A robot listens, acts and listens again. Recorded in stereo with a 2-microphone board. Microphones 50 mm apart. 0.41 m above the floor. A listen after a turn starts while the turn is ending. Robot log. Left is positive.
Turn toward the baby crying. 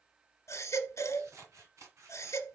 cmd yaw +90
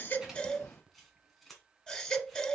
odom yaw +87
note: So it is at 15° left.
cmd yaw +15
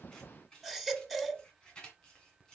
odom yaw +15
end: Facing the baby crying, 1 to 2 m away.